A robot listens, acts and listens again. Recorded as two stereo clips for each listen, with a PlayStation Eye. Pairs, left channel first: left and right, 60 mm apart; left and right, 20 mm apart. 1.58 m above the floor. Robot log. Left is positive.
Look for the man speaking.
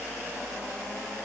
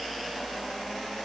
cmd idle
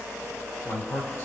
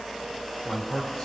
note: The man speaking: about 50° left or 130° left.
cmd yaw +50
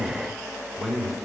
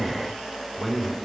end: Found it: a man speaking, straight ahead.